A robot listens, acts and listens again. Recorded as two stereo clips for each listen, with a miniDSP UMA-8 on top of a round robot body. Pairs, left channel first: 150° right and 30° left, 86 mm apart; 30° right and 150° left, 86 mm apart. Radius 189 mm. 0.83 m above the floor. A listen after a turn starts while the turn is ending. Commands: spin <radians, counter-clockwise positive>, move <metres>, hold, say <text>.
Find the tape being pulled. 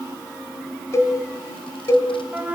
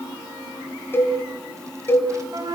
hold
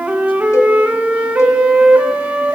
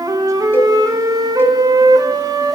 hold
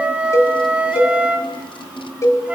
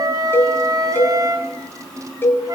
say I can't make out tape being pulled to turn to.